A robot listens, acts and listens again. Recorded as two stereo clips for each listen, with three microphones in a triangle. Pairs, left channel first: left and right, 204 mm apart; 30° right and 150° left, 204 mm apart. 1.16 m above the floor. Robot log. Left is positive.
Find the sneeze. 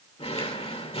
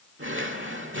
cmd idle
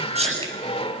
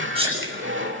note: The sneeze: 150° right.
cmd yaw -150
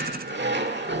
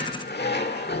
end: I heard a sneeze from this way, but can't make it out now.